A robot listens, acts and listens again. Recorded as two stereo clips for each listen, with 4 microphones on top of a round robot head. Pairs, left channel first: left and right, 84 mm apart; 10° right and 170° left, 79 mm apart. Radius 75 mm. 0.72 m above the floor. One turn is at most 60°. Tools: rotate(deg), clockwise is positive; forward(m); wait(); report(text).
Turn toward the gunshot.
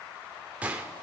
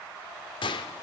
rotate(15)
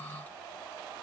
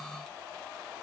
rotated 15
report("Facing where the gunshot came from. I can't hear it now.")